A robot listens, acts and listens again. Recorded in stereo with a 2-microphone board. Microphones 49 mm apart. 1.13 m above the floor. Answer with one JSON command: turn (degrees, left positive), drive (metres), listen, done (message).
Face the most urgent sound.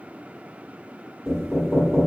{"listen": true}
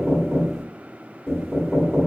{"listen": true}
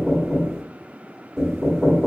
{"done": "I can't make out anything urgent to turn to."}